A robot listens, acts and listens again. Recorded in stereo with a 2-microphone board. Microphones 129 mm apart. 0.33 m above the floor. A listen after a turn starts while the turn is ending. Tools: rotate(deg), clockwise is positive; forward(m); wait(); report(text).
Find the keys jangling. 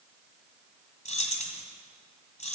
rotate(-65)
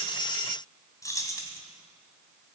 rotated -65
rotate(-30)
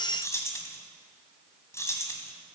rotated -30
rotate(-25)
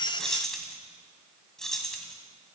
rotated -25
report("Found it: keys jangling, straight ahead, 1 to 2 m away.")